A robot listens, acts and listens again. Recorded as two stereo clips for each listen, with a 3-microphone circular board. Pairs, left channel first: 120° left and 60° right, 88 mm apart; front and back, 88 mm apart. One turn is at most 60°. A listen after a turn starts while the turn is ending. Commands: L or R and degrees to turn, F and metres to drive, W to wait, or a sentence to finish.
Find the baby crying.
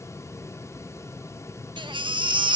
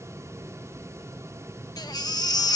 R40
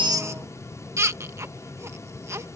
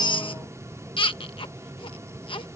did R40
Facing the baby crying.